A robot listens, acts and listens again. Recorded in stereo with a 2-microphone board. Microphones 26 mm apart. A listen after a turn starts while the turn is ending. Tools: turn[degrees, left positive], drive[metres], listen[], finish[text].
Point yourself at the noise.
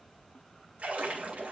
Thought: The splash: about 65° right or 115° right.
Action: turn[-65]
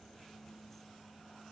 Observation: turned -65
Action: listen[]
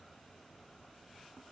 Action: finish[I heard a splash, but can't make it out now. It was about straight ahead or 50° right.]